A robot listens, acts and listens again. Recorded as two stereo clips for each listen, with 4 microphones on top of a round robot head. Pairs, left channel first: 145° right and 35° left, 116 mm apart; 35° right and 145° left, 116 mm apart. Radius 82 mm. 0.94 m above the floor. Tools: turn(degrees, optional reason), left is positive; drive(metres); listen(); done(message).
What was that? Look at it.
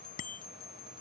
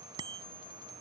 turn(degrees=-160, reason="The bicycle bell: 160° right.")
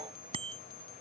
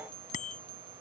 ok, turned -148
turn(degrees=-10, reason="The bicycle bell is now 10° right.")
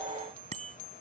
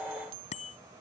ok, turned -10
done("Found it: a bicycle bell, straight ahead.")